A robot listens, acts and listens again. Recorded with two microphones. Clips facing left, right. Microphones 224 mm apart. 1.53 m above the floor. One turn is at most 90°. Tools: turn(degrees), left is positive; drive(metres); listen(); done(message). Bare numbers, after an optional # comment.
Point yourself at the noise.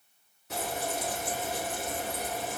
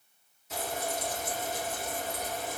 # The frying: about 65° left or 115° left.
turn(65)
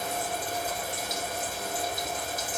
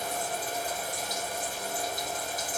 # So it is at 25° left.
turn(25)
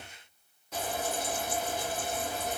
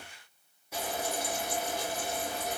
# The frying is now 10° right.
turn(-10)
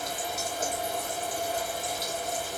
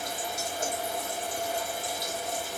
done("Facing the frying.")